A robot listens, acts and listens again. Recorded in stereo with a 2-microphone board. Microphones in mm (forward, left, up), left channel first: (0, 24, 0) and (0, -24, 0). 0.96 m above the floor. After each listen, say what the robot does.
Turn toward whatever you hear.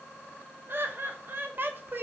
Turn 50° right.
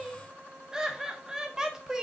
Turn 20° right.
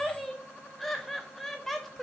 Found it: laughter, straight ahead.